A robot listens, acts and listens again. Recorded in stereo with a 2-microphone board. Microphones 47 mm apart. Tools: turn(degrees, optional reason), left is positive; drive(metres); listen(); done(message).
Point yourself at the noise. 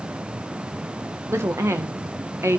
turn(degrees=-75, reason="The woman speaking: about 75° right or 105° right.")
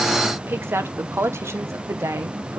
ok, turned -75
turn(degrees=-80, reason="So it is at 80° right.")
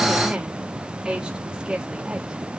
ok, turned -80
turn(degrees=-15, reason="The woman speaking is now 15° right.")
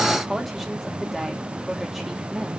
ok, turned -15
done("Facing the woman speaking.")